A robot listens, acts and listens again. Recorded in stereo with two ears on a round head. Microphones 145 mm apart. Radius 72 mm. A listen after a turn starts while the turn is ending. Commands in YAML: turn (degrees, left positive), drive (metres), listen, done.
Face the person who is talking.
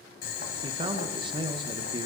turn: -30
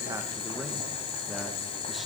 listen: true
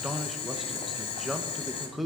done: "Found it: a man speaking, straight ahead, under 1 m away."